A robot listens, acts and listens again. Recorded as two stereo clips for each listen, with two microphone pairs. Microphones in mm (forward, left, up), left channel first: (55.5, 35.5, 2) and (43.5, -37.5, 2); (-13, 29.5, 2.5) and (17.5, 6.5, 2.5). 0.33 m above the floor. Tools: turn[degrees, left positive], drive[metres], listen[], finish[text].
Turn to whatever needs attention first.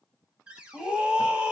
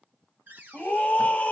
Thought: The scream: 170° right.
Action: turn[-170]
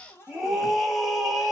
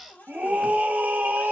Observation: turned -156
Thought: The scream is now 15° right.
Action: turn[-15]
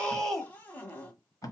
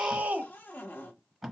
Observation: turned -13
Action: finish[Found it: a scream, straight ahead.]